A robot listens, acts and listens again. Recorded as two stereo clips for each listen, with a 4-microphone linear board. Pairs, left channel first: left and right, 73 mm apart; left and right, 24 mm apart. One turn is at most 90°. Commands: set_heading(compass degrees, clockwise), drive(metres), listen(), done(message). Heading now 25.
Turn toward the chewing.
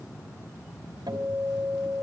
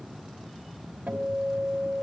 listen()
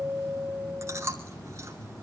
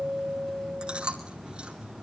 set_heading(70)
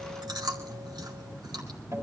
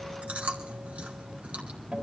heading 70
set_heading(160)
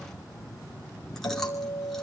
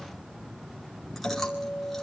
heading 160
listen()
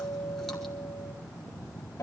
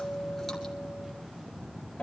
listen()
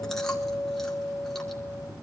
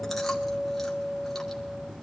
done("I heard chewing from this way, but can't make it out now.")